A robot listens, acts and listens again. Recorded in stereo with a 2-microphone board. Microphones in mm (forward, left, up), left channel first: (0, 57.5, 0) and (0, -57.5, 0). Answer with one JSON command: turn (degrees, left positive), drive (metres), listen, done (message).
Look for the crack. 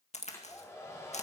{"turn": 90}
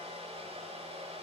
{"done": "Facing where the crack came from. I can't hear it now."}